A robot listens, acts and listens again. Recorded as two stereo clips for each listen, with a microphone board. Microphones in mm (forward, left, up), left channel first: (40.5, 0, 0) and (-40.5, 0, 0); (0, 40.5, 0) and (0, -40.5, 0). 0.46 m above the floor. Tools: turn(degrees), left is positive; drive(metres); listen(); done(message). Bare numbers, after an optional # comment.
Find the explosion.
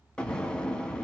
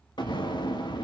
# The explosion: 80° left.
turn(80)
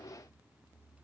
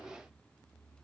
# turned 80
done("I heard an explosion from this way, but can't make it out now.")